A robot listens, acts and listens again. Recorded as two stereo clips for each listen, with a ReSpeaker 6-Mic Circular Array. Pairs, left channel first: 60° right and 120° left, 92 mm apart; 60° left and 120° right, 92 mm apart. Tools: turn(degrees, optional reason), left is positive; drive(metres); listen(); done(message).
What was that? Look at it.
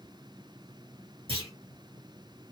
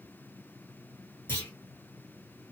turn(degrees=125, reason="The clunk: 125° left.")
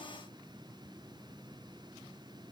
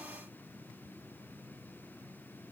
done("I heard a clunk from this way, but can't make it out now.")